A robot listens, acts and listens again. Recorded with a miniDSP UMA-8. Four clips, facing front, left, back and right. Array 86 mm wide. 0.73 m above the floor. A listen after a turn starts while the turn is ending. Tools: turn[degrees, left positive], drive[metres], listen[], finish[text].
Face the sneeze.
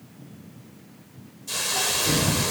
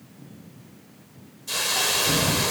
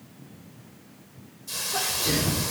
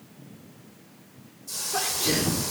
Thought: The sneeze: 120° right.
Action: turn[-120]
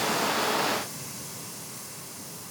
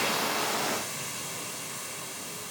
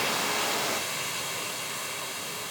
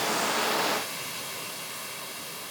Action: finish[I heard a sneeze from this way, but can't make it out now.]